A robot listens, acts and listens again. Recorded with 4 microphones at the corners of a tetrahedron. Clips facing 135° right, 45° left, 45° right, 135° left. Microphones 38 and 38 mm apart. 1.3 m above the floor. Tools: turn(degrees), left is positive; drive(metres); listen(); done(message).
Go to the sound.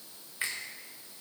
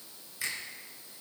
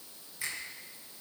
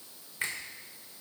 turn(degrees=170)
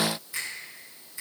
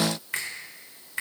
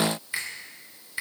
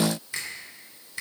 turn(degrees=25)
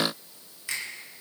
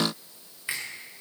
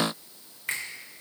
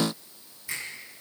turn(degrees=-20)
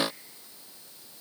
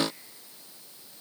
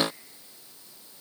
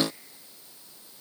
listen()
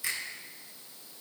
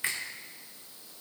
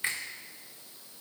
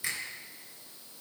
drive(metres=1.0)
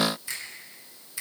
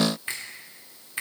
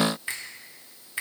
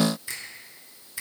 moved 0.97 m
drive(metres=1.0)
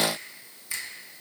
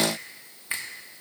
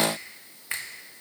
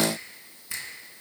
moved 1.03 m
drive(metres=1.0)
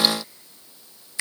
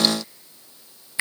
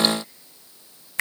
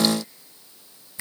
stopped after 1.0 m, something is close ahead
turn(degrees=-20)
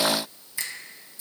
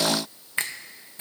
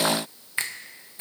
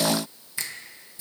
done("I am next to the finger snap.")